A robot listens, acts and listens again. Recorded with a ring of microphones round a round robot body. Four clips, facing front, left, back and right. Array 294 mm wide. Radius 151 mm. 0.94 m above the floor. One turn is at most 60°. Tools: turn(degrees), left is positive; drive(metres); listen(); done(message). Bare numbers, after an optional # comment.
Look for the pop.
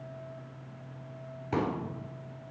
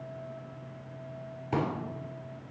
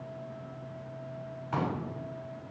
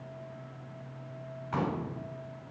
# The pop: 50° left.
turn(50)
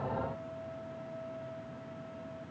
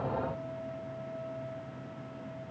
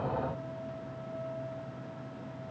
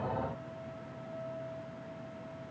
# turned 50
done("I heard a pop from this way, but can't make it out now.")